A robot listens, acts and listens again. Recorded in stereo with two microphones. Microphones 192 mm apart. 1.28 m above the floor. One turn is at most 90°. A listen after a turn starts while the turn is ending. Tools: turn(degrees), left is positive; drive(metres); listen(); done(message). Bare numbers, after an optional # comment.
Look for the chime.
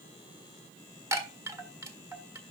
# The chime: about 15° right or 165° right.
turn(-15)
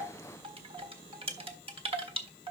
# So it is at 150° right.
turn(-90)
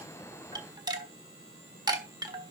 # The chime is now 25° right.
turn(-25)
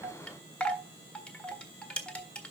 done("Facing the chime, 1 to 2 m away.")